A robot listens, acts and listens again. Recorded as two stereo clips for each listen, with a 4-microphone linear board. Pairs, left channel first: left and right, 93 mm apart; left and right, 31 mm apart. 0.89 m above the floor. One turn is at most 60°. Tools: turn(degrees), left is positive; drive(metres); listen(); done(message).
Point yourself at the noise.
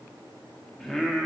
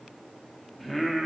turn(degrees=30)
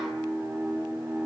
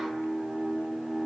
turn(degrees=-25)
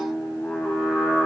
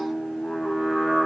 turn(degrees=15)
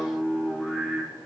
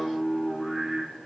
done("Found it: singing, straight ahead.")